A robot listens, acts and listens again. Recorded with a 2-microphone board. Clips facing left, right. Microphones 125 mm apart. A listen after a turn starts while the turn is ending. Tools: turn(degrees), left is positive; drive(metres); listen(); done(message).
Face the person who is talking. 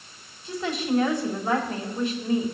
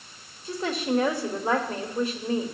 turn(degrees=-45)
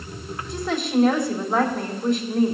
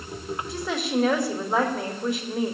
turn(degrees=-10)
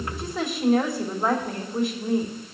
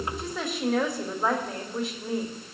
done("Facing the woman speaking, 2 to 4 m away.")